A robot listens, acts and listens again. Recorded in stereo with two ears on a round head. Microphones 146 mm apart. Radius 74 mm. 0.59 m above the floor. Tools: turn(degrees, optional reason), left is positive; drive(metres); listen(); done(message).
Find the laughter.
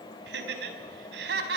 turn(degrees=-70, reason="The laughter: about 70° right or 110° right.")
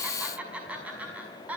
turn(degrees=-10, reason="So it is at 10° right.")
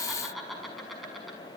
done("Facing the laughter, over 4 m away.")